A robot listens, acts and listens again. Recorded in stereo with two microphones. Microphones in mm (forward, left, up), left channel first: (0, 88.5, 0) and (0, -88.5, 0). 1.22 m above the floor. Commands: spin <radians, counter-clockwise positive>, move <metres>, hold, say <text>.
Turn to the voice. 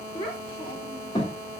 spin 0.35
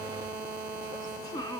spin 0.35
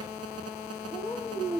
spin 0.26
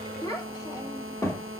spin 0.26
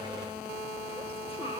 hold
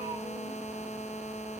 hold
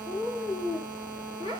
spin 0.52
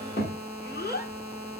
spin 2.09
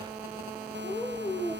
spin 0.35
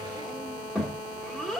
say Found it: a child speaking, straight ahead.